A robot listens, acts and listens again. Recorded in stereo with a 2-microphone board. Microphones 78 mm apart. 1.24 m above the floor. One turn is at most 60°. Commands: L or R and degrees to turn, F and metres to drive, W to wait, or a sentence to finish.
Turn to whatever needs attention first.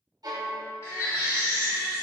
L35
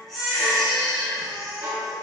Facing the baby crying.